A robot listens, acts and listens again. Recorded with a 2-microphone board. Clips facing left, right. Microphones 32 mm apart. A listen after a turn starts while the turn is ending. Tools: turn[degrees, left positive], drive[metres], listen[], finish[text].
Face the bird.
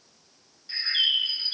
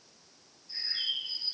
Thought: The bird: about 75° left or 105° left.
Action: turn[75]
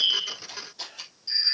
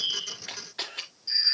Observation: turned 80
Action: finish[Facing the bird.]